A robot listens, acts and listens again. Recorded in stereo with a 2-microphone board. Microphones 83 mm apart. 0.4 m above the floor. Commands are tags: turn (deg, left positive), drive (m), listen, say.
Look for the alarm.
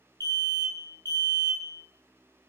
<turn deg="-55"/>
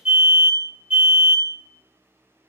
<turn deg="-20"/>
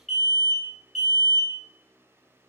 <say>Found it: an alarm, straight ahead, 1 to 2 m away.</say>